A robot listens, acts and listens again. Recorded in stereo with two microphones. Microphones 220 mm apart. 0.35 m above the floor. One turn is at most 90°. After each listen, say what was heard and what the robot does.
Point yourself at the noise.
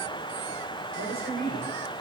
The woman speaking: about 45° right or 135° right. Turn 45° right.
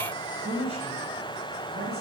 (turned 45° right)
So it is at 105° right. Turn 90° right.
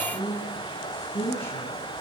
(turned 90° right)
The woman speaking is now 10° left. Turn 10° left.
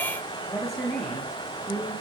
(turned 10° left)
Found it: a woman speaking, straight ahead.